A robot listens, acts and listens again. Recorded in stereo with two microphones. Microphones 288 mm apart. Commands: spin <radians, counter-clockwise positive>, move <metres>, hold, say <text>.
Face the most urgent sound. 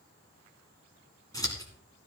hold
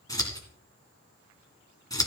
hold
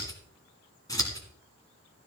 say I can't make out anything urgent, only scissors.